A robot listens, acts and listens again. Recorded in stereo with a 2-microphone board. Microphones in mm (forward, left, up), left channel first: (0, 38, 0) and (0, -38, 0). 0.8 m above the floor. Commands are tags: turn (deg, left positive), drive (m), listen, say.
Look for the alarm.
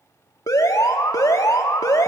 <turn deg="50"/>
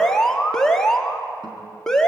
<turn deg="10"/>
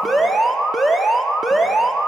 <say>Found it: an alarm, straight ahead.</say>